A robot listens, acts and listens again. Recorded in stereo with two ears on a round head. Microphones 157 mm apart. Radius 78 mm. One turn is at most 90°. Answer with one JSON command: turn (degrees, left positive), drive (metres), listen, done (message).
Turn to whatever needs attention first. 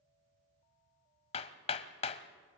{"listen": true}
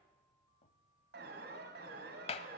{"turn": -60}
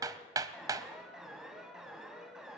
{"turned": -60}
{"done": "Facing the alarm."}